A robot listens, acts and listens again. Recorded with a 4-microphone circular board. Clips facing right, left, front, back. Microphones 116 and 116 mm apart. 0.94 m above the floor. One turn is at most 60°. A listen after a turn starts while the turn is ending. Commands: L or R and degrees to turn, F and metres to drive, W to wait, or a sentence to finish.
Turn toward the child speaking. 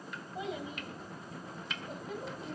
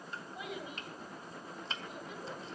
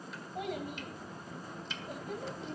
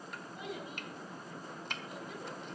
R40
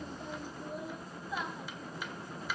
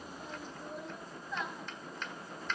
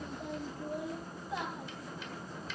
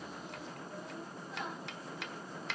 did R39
R10
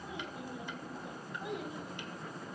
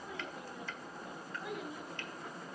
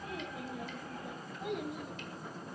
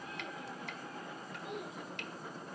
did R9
R20
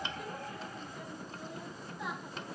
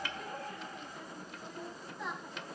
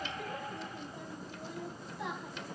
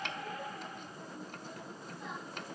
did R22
Facing the child speaking.